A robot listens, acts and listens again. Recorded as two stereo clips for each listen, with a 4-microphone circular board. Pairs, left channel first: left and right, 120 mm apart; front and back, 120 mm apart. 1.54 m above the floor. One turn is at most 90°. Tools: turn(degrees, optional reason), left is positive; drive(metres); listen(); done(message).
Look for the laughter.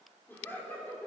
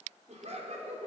turn(degrees=90, reason="The laughter: 165° left.")
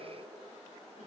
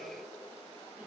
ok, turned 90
turn(degrees=75, reason="Nothing new. It was at 75° left.")
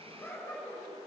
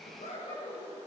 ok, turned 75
turn(degrees=20, reason="The laughter is now 20° left.")
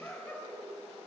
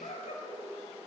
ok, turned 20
turn(degrees=10, reason="The laughter is now 10° left.")
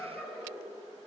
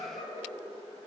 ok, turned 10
done("Found it: laughter, straight ahead.")